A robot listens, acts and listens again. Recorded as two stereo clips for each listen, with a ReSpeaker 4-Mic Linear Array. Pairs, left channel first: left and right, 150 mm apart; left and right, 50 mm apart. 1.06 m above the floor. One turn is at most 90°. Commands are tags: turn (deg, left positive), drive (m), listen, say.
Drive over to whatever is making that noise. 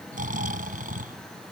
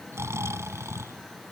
<turn deg="-65"/>
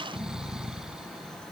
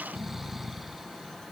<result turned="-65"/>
<drive m="1.0"/>
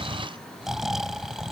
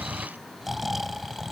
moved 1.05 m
<drive m="1.0"/>
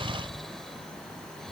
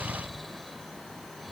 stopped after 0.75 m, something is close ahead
<say>Arrived at the snoring, straight ahead.</say>